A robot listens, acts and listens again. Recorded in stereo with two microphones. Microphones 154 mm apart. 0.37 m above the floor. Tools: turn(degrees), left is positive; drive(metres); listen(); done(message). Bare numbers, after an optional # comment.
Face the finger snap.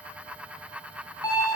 listen()
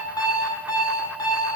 listen()
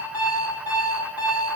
done("I can't make out a finger snap to turn to.")